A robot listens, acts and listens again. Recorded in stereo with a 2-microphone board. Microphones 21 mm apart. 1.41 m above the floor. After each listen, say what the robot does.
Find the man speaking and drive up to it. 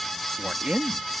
Turn 90° right.
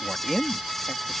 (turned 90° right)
Turn 10° left.
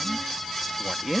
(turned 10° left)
Drive 1.0 m forward.
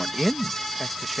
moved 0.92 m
Turn 10° right.
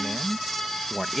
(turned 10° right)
Drive 1.0 m forward.
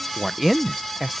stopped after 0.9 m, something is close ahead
Arrived at the man speaking, straight ahead.